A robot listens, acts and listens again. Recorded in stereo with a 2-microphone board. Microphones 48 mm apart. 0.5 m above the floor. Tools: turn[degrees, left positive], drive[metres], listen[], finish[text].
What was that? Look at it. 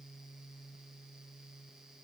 Action: listen[]
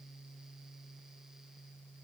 Action: listen[]
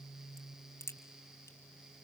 Action: turn[90]
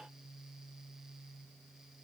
Action: finish[I heard a crack from this way, but can't make it out now.]